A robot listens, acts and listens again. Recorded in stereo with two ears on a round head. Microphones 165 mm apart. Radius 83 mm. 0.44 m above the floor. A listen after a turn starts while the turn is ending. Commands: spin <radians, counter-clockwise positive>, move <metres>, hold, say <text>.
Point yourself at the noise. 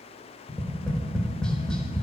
spin 0.52
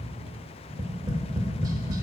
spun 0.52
spin -0.44
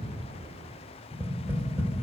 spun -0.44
spin -0.26
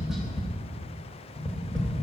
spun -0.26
say Found it: tapping, straight ahead, under 1 m away.